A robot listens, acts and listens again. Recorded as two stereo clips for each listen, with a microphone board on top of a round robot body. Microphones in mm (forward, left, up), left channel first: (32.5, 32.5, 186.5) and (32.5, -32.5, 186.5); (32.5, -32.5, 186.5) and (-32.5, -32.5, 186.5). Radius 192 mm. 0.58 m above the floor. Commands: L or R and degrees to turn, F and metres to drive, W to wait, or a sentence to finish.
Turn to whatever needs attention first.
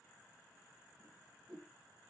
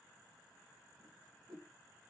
W
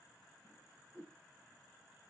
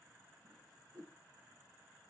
W
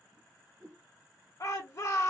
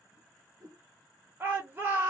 L125
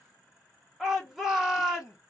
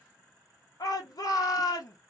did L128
Found it: a shout, straight ahead.